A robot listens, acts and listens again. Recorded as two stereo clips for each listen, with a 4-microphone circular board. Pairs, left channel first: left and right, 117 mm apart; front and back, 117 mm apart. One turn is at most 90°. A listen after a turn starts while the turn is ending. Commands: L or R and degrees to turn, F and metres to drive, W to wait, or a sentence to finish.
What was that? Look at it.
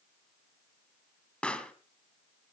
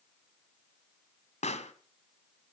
L10
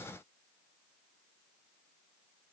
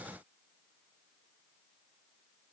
I heard a pop from this way, but can't make it out now.